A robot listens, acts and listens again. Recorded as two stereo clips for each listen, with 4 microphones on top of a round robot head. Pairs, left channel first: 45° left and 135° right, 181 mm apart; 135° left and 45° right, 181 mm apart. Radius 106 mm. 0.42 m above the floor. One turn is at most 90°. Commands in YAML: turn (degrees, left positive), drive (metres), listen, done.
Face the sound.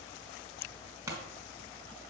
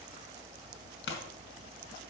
turn: 90
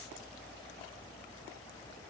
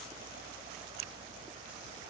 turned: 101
turn: 55
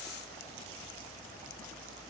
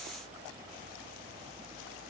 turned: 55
done: "I heard a pop from this way, but can't make it out now."